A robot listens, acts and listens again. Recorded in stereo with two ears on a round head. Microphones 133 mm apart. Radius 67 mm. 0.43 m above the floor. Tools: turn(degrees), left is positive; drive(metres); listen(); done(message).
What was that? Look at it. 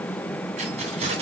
turn(degrees=-45)
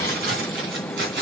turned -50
turn(degrees=-75)
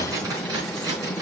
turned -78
turn(degrees=-30)
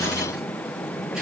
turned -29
listen()
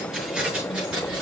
done("Facing the keys jangling, over 4 m away.")